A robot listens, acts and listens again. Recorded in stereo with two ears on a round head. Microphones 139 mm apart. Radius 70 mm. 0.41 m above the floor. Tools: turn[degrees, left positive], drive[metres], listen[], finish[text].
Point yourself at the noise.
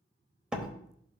Action: turn[-30]
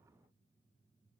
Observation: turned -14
Action: listen[]
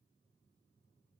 Action: finish[I heard a door slam, but can't make it out now. It was about 10° left or 160° right.]